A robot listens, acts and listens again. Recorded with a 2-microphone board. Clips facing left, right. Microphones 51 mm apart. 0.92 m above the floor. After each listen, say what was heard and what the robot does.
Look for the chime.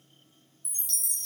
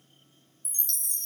Turn 30° left.
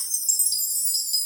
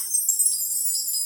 So it is at 25° right. Turn 25° right.
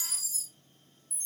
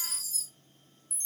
The chime is now 10° left. Turn 10° left.
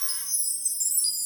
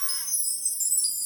Found it: a chime, straight ahead, under 1 m away.